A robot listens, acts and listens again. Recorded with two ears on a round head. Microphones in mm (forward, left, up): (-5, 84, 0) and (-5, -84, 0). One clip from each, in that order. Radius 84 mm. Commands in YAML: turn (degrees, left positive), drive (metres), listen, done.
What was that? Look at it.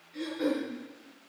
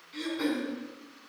turn: -60
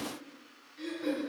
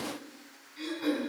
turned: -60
turn: -60
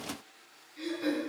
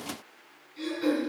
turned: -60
turn: -10
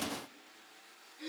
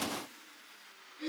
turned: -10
done: "Facing the throat clearing, over 4 m away."